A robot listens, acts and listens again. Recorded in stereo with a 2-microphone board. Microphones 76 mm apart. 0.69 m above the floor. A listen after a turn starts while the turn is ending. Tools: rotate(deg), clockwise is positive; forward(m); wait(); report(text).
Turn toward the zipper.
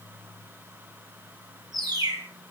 wait()
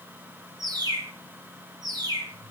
wait()
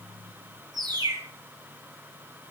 report("I can't make out a zipper to turn to.")